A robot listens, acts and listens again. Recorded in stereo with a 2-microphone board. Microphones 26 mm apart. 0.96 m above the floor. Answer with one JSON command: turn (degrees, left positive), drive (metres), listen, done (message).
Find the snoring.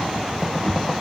{"listen": true}
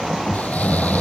{"turn": 75}
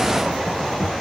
{"listen": true}
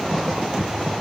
{"listen": true}
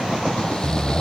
{"turn": 30}
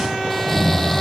{"turn": 10}
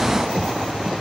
{"listen": true}
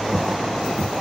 {"listen": true}
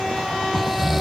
{"done": "Found it: snoring, straight ahead."}